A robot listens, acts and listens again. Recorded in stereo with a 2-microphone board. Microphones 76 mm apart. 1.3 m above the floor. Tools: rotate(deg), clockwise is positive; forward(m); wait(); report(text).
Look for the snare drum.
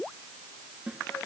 rotate(20)
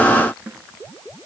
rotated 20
rotate(140)
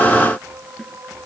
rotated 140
rotate(-10)
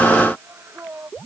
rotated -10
wait()
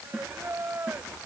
report("Facing the snare drum.")